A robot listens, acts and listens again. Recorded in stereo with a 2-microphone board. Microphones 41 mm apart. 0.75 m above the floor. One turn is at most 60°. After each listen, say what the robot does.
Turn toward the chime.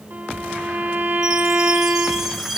Turn 30° right.
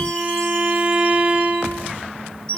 Turn 25° left.
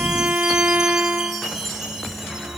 Facing the chime.